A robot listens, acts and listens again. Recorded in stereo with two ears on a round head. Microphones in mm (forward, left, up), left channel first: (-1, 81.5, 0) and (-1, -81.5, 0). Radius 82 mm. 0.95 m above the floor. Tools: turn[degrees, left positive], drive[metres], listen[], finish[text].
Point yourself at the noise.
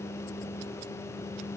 Action: listen[]
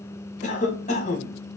Thought: The cough: about 40° left or 140° left.
Action: turn[40]
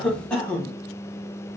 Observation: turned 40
Action: finish[Facing the cough, 1 to 2 m away.]